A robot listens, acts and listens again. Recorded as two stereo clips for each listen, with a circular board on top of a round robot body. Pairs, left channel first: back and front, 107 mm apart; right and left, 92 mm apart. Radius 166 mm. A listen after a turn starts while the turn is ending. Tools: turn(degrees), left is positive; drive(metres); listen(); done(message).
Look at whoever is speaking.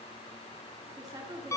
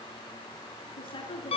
turn(degrees=-60)
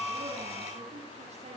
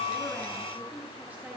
listen()
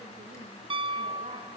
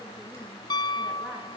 listen()
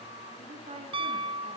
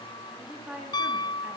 turn(degrees=15)
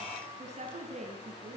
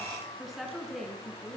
done("Facing the woman speaking, over 4 m away.")